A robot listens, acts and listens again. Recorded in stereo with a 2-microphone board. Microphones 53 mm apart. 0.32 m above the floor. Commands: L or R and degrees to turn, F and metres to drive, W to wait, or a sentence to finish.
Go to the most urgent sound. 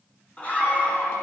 L25
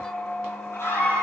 L130
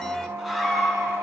F1.0
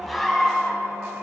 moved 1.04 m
F1.0
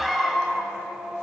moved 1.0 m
F1.0
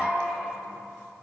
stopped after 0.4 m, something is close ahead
Arrived at the scream, straight ahead.